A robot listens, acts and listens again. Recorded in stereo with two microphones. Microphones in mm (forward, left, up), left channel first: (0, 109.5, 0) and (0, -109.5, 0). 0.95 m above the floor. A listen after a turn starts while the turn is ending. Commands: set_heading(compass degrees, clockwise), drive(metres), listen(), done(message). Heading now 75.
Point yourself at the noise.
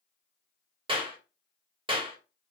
set_heading(100)
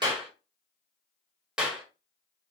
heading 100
done("Facing the clap, 1 to 2 m away.")